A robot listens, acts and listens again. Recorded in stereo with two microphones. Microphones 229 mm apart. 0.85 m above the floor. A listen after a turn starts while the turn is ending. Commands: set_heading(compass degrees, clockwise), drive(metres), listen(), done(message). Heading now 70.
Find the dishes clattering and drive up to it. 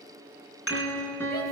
set_heading(340)
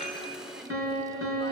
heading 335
listen()
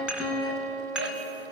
drive(1.0)
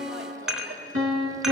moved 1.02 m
drive(1.0)
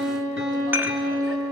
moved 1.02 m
set_heading(345)
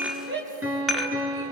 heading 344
drive(1.0)
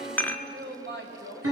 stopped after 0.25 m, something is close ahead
set_heading(334)
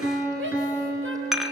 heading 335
done("Arrived at the dishes clattering, straight ahead.")